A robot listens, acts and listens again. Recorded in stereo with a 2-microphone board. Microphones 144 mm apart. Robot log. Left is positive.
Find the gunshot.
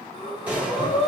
cmd yaw -30
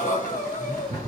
cmd idle
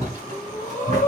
end: I heard a gunshot, but can't make it out now. It was about 20° left or 140° right.